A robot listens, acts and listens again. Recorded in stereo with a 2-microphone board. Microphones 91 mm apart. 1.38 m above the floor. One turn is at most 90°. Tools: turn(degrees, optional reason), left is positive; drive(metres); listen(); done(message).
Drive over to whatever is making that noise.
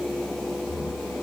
turn(degrees=30, reason="The snoring: about 30° left or 150° left.")
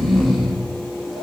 drive(metres=1.0)
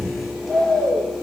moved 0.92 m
drive(metres=1.0)
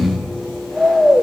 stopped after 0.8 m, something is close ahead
done("I am next to the snoring.")